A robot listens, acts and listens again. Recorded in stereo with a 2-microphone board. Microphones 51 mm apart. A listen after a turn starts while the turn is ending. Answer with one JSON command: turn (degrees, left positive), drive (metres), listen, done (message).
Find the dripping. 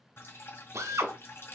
{"turn": 55}
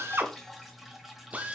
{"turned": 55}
{"done": "Found it: dripping, straight ahead."}